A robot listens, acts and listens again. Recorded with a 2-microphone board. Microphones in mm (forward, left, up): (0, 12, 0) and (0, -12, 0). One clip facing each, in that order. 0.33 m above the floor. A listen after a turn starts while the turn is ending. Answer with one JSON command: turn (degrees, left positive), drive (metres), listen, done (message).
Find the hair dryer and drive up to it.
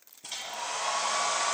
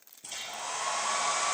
{"turn": 20}
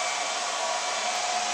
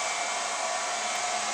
{"turn": 145}
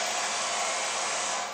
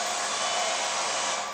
{"turn": -20}
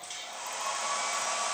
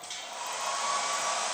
{"drive": 1.0}
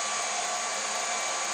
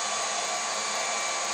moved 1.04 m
{"drive": 1.0}
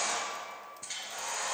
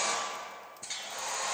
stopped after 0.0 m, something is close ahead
{"done": "Something is in my way. I am facing the hair dryer but have not reached it."}